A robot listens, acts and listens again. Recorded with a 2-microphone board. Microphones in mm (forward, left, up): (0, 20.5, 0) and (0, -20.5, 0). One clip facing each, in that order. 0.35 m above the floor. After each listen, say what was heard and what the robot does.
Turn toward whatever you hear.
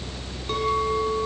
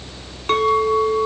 The clink: about 60° right or 120° right. Turn 60° right.
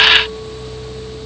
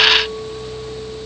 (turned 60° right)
Keep listening.
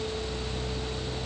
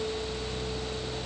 Keep listening.
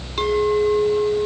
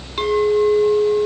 Facing the clink, 2 to 4 m away.